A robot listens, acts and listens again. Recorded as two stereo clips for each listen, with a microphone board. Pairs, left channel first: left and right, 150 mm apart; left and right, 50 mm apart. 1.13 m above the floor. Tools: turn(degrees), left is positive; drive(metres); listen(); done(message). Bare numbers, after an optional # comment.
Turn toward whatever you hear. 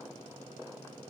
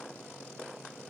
listen()
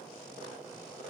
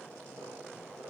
listen()
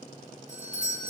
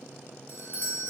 # The doorbell: about 50° left or 130° left.
turn(50)
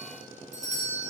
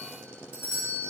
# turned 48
# So it is at 70° left.
turn(70)
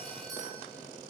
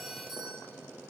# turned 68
done("Facing the doorbell, 1 to 2 m away.")